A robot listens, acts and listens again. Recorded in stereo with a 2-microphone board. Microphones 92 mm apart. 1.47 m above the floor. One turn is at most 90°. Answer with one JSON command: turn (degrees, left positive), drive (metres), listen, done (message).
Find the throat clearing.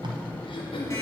{"turn": 65}
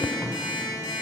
{"listen": true}
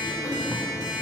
{"listen": true}
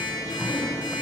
{"done": "I heard throat clearing, but can't make it out now. It was about straight ahead or 50° left."}